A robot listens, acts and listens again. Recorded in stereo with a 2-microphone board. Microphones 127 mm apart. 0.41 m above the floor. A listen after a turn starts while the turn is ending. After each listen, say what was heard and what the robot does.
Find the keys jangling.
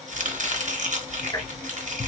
The keys jangling: about 60° left or 120° left. Turn 60° left.
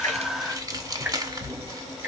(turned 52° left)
Facing the keys jangling, 1 to 2 m away.